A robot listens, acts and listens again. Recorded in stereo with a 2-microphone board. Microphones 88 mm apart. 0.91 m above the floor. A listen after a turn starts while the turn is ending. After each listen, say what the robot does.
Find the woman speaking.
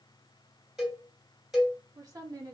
Turn 40° right.
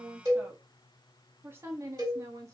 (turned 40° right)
Turn 35° right.
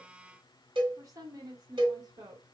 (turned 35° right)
Turn 50° right.
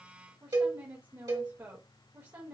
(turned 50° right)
Turn 20° right.
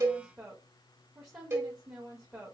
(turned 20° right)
Facing the woman speaking, 1 to 2 m away.